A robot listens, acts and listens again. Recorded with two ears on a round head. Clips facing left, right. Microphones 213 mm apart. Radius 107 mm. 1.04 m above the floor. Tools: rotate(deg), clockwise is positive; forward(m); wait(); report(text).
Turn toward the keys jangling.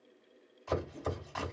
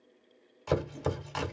wait()
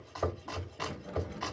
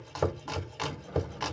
rotate(-45)
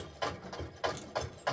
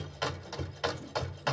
wait()
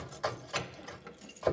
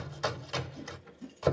rotate(-85)
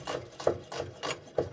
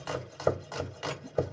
wait()
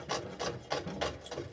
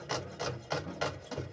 rotate(-45)
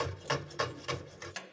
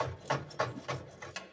report("Found it: keys jangling, straight ahead, under 1 m away.")